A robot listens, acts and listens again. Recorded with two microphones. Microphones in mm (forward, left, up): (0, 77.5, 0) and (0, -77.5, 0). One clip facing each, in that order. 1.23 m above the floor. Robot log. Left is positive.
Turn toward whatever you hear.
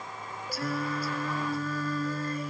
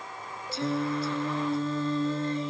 note: The singing: about 25° right or 155° right.
cmd yaw -25
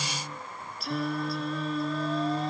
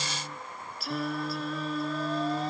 end: Found it: singing, straight ahead.